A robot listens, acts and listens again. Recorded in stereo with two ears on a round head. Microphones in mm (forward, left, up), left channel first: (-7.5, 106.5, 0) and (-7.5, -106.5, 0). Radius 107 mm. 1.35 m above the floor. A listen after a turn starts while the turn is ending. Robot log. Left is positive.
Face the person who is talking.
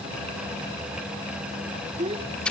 note: The child speaking: about 25° right or 155° right.
cmd yaw -25
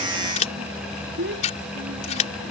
note: So it is at 130° right.
cmd yaw -130
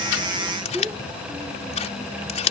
note: The child speaking is now 10° right.
cmd yaw -10
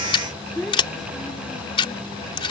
end: Facing the child speaking.